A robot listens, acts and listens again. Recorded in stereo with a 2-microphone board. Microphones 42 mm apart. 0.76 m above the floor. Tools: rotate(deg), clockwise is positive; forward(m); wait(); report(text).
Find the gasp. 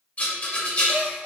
rotate(75)
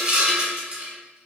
wait()
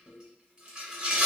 report("I heard a gasp, but can't make it out now. It was about straight ahead or 30° right.")